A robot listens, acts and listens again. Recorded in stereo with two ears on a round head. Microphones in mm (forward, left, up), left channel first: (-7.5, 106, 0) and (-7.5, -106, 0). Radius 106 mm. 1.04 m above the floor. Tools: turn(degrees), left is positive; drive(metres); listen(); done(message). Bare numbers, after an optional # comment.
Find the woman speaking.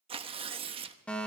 listen()
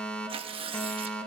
listen()
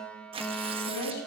turn(90)
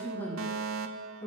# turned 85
# So it is at 10° left.
turn(10)
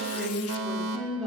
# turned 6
done("Found it: a woman speaking, straight ahead.")